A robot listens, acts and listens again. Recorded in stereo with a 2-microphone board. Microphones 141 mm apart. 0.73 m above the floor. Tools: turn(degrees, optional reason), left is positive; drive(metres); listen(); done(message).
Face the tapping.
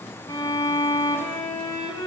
listen()
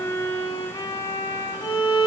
listen()
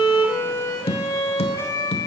turn(degrees=45, reason="The tapping: about 45° left or 135° left.")
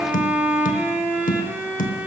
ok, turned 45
turn(degrees=85, reason="So it is at 85° left.")
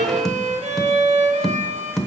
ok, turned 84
done("Found it: tapping, straight ahead.")